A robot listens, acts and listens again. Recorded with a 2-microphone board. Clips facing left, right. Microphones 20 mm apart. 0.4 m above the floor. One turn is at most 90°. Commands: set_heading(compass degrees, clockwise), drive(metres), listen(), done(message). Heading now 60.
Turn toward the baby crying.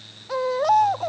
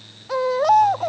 set_heading(90)
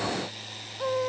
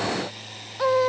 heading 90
set_heading(180)
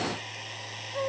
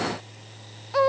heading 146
set_heading(231)
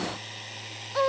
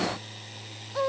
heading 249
set_heading(229)
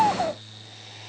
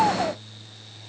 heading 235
done("Facing the baby crying.")